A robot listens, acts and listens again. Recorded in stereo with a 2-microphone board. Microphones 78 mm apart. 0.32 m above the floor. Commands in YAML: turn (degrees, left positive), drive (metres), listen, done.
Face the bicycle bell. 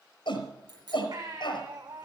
turn: -60
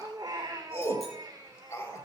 listen: true
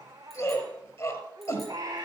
listen: true
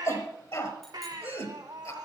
done: "I heard a bicycle bell, but can't make it out now. It was about straight ahead or 60° right."